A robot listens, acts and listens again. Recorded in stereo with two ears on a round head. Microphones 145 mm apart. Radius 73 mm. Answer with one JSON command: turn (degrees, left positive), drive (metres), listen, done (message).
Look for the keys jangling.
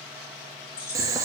{"turn": 60}
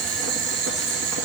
{"listen": true}
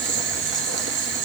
{"listen": true}
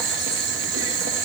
{"done": "I heard keys jangling, but can't make it out now. It was about straight ahead or 60° left."}